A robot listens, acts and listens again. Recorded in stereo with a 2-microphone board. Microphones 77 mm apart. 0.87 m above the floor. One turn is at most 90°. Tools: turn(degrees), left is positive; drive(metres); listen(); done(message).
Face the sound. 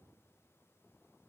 listen()
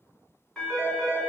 turn(degrees=30)
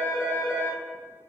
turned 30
turn(degrees=90)
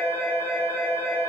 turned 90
turn(degrees=45)
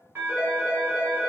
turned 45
turn(degrees=-25)
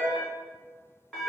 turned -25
turn(degrees=10)
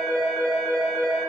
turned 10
done("Facing the phone ringing.")